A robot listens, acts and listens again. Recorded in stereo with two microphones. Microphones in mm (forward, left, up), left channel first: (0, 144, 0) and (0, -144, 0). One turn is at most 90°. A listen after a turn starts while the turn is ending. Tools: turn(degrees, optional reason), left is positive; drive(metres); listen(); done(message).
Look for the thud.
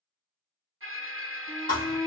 turn(degrees=25, reason="The thud: about 25° left or 155° left.")
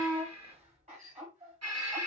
listen()
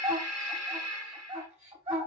done("I heard a thud, but can't make it out now. It was about straight ahead or 130° left.")